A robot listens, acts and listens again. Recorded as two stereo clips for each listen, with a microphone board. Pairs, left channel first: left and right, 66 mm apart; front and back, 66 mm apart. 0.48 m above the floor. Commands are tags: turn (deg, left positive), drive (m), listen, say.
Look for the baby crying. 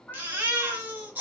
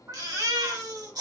<turn deg="-150"/>
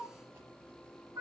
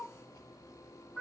<listen/>
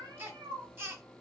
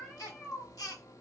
<turn deg="-30"/>
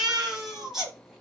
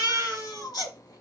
<say>Found it: a baby crying, straight ahead, under 1 m away.</say>